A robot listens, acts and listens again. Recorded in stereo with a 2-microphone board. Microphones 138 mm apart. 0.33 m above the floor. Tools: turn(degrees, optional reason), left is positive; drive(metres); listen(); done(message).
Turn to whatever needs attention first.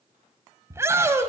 turn(degrees=-20, reason="The shout: about 20° right or 160° right.")
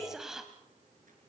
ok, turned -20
listen()
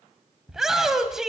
done("Found it: a shout, straight ahead.")